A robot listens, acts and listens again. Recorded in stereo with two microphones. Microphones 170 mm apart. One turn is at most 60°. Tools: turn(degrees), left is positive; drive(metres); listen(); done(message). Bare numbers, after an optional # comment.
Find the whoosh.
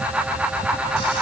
listen()
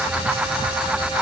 listen()
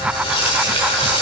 done("I can't make out a whoosh, only frying.")